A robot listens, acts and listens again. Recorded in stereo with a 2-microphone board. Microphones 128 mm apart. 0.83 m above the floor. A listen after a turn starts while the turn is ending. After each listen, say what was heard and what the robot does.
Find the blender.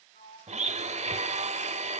The blender: about 60° right or 120° right. Turn 60° right.
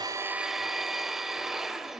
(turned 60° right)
Facing the blender, 1 to 2 m away.